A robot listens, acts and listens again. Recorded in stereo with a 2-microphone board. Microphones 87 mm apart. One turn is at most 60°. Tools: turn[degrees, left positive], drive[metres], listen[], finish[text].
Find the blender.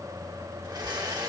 Thought: The blender: about 55° right or 125° right.
Action: turn[-55]
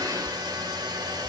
Thought: So it is at 65° right.
Action: turn[-60]
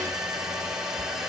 Action: finish[Found it: a blender, straight ahead, 2 to 4 m away.]